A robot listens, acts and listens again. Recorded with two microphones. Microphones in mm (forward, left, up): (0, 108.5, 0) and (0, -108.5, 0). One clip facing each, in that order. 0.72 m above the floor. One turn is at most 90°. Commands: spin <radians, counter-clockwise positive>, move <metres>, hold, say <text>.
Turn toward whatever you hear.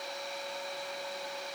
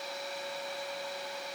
hold
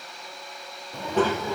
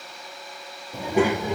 spin -0.35
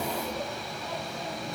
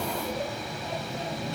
spin -0.44
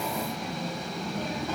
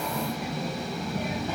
spin -0.52
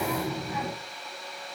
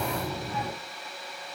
spin 0.17
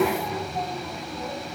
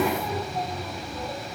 say Found it: a child speaking, straight ahead.